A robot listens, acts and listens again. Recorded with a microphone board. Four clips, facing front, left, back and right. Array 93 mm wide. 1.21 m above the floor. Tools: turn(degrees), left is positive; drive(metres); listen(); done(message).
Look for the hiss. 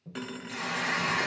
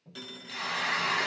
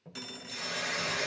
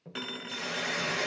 turn(degrees=50)
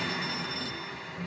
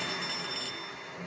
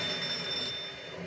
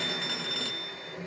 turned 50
turn(degrees=15)
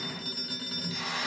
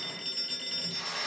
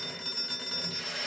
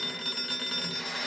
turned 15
done("Facing the hiss, 2 to 4 m away.")